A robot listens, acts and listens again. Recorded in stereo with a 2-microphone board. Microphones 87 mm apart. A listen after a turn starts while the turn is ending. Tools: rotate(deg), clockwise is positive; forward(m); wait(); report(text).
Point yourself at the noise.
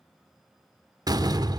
rotate(50)
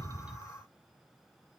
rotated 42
wait()
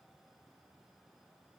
report("I heard a door slam, but can't make it out now. It was about 10° right or 90° right.")